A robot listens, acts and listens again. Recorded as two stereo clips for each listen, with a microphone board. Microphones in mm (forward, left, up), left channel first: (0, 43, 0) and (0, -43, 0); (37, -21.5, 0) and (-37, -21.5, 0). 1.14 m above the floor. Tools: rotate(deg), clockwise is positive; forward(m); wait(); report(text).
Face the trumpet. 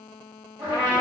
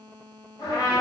rotate(30)
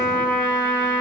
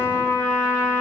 report("Facing the trumpet.")